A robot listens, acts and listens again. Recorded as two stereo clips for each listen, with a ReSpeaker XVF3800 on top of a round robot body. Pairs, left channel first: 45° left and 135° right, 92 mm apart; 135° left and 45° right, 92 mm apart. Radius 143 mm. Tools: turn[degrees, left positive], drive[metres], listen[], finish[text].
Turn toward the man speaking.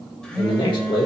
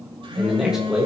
Thought: The man speaking: 30° left.
Action: turn[30]
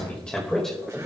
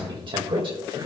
Thought: The man speaking is now 40° right.
Action: turn[-40]
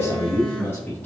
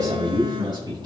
Thought: The man speaking is now 20° right.
Action: turn[-20]
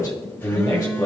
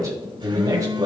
Thought: The man speaking is now 10° right.
Action: turn[-10]
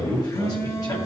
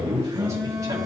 Action: finish[Found it: a man speaking, straight ahead, 2 to 4 m away.]